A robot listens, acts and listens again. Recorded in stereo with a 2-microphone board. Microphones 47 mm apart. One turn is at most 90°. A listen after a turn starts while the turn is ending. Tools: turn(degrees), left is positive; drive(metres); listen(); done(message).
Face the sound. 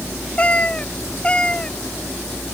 turn(degrees=25)
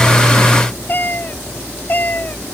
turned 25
turn(degrees=90)
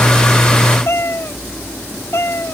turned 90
turn(degrees=55)
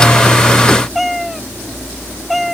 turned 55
done("Found it: a cat meowing, straight ahead.")